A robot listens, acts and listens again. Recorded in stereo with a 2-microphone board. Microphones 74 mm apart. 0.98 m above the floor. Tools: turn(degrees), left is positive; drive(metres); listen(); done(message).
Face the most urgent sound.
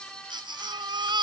turn(degrees=-90)
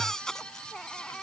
done("Found it: a baby crying, straight ahead.")